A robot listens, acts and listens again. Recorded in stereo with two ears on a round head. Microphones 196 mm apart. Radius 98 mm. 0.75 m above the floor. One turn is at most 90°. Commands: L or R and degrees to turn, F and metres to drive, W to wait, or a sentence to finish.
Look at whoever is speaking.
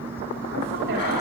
R50
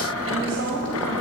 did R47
R80
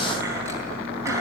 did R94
L15
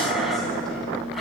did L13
W
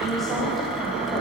Facing the woman speaking.